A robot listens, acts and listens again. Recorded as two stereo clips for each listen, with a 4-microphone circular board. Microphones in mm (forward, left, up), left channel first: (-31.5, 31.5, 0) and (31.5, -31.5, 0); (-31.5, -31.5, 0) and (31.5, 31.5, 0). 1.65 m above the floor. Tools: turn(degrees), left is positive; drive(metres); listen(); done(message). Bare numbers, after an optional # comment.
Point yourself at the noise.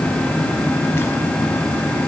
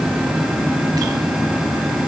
listen()
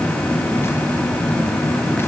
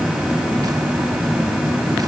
listen()
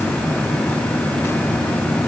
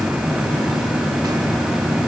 done("I can't make out anything.")